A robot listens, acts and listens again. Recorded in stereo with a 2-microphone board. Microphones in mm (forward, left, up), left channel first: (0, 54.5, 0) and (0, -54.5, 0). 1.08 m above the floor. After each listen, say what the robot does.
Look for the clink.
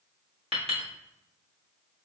Turn 60° right.
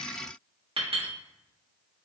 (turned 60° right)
Turn 60° right.
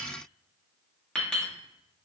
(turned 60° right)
Facing the clink.